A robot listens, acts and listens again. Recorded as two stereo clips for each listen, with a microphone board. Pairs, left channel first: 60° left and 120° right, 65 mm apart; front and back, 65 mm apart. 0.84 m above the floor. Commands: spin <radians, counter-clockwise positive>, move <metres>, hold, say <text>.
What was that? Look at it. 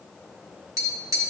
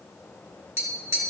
spin -2.44
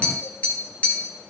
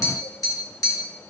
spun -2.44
say Facing the tapping, 2 to 4 m away.